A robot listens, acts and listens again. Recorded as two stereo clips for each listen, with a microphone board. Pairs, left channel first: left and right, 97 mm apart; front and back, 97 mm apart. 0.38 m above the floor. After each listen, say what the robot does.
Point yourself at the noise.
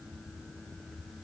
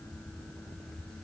Keep listening.
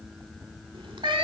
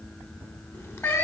Turn 60° right.
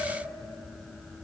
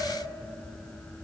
Keep listening.
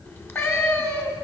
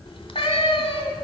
Turn 25° left.
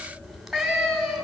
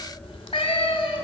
Facing the cat meowing, 1 to 2 m away.